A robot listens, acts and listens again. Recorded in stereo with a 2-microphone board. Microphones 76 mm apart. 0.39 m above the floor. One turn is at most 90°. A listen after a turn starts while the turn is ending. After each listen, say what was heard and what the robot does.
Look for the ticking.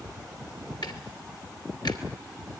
The ticking: about 70° left or 110° left. Turn 70° left.
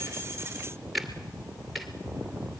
Facing the ticking, 2 to 4 m away.